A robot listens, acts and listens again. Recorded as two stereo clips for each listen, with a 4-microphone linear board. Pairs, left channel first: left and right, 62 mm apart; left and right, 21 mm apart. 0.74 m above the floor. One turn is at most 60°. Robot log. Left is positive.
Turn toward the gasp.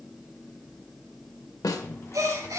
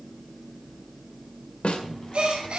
note: The gasp: about 55° right or 125° right.
cmd yaw -55
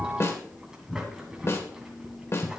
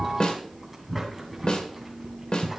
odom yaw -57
cmd idle
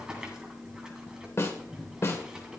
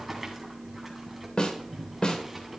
end: I heard a gasp, but can't make it out now. It was about straight ahead or 65° right.